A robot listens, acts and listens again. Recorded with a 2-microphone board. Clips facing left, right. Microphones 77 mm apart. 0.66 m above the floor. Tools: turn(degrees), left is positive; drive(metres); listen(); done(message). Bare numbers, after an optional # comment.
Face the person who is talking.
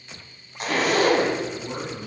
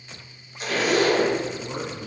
# The man speaking: about 25° left or 155° left.
turn(25)
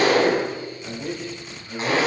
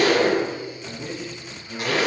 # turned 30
done("Found it: a man speaking, straight ahead.")